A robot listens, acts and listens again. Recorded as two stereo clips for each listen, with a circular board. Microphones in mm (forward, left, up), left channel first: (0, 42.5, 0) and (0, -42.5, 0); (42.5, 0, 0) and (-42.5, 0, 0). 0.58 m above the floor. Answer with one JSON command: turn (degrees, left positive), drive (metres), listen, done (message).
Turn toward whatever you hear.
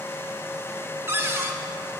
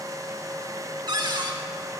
{"turn": -150}
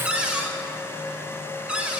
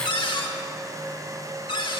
{"turn": -10}
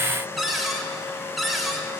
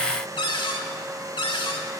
{"done": "Found it: a cupboard door, straight ahead, under 1 m away."}